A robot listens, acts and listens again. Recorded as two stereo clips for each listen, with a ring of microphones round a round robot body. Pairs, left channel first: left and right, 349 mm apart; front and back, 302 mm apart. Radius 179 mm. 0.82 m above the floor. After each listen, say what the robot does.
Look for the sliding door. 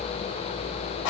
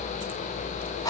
Keep listening.
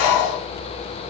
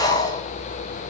Keep listening.
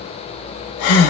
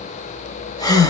I can't make out a sliding door to turn to.